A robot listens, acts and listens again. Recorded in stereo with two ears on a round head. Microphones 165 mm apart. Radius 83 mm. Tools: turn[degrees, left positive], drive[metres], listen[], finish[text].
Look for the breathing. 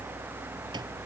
Action: listen[]
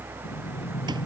Thought: The breathing: about 45° left or 135° left.
Action: turn[45]
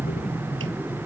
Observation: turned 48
Action: finish[Found it: breathing, straight ahead.]